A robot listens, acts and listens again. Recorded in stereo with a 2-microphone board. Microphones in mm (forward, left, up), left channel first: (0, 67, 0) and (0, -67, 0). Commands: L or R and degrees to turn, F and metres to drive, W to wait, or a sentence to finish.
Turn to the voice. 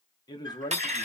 L30
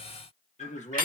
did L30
L115
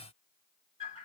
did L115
W
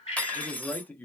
L15
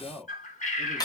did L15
Facing the man speaking, 1 to 2 m away.